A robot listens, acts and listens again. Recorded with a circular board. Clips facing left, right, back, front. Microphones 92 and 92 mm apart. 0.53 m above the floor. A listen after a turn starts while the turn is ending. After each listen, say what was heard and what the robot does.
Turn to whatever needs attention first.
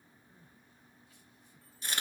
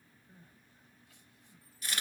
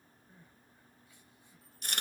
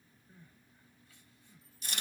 The crying: 105° right. Turn 105° right.
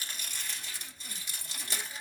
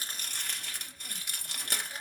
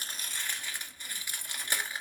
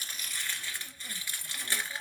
Keep listening.
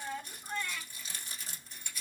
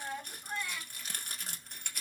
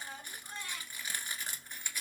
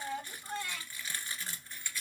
The crying is now 10° right. Turn 10° right.
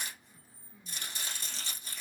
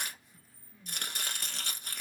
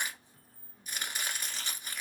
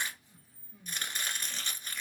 Facing the crying, 1 to 2 m away.